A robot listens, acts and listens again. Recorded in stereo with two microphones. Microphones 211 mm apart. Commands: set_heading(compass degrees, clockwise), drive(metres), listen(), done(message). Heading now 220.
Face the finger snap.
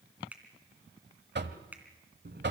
set_heading(250)
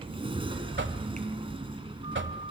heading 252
listen()
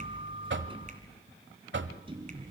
listen()
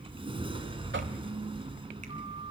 done("I heard a finger snap, but can't make it out now. It was about 25° left or 140° right.")